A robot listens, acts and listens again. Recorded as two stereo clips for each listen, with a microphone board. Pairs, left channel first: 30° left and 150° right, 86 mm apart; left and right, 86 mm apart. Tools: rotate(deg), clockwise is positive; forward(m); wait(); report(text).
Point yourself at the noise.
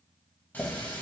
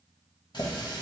rotate(-100)
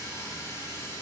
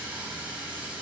rotate(20)
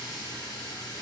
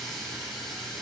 report("Facing the running tap.")